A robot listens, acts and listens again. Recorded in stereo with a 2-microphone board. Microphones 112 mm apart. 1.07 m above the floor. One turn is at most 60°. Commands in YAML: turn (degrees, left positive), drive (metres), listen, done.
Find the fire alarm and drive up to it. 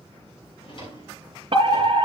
turn: -50
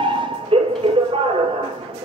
turn: -60
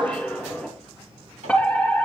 turn: 10
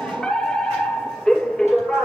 drive: 1.0
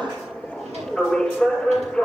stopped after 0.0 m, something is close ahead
done: "Blocked. The fire alarm is further on, straight ahead."